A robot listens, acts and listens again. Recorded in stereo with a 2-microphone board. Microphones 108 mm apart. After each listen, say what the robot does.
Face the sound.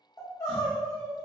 Turn 35° left.
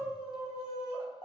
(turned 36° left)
Turn 105° left.
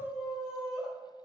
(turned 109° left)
Facing the crying, under 1 m away.